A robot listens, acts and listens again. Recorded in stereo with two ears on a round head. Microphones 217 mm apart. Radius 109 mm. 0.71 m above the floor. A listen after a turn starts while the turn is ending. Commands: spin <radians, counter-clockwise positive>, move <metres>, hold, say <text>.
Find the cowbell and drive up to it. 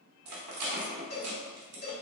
spin 0.70
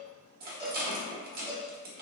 spin 1.66
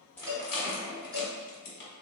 move 1.0
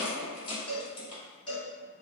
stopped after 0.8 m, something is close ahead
spin 0.17
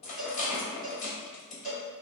say Arrived at the cowbell, straight ahead.